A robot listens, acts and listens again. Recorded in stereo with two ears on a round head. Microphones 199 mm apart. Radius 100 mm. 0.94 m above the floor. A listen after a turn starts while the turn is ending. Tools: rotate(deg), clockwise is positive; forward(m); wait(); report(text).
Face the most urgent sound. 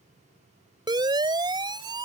rotate(20)
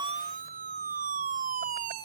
rotate(140)
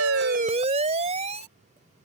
rotate(30)
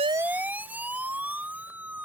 rotate(10)
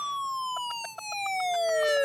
report("Facing the siren.")